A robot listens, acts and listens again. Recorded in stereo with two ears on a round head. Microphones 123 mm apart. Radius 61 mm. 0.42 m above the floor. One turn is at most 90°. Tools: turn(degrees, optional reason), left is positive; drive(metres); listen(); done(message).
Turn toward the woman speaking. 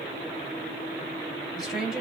turn(degrees=-30)
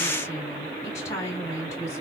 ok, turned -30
turn(degrees=25, reason="So it is at 25° left.")
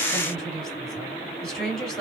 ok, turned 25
done("Facing the woman speaking, 2 to 4 m away.")